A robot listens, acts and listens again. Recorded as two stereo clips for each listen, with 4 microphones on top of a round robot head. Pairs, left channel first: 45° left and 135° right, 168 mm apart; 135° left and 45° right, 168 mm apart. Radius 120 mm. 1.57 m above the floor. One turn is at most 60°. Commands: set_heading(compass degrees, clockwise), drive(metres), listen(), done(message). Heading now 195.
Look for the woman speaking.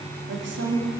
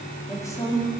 set_heading(255)
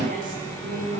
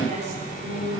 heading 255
set_heading(315)
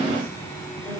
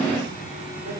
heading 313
set_heading(348)
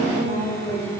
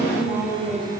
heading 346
done("Facing the woman speaking.")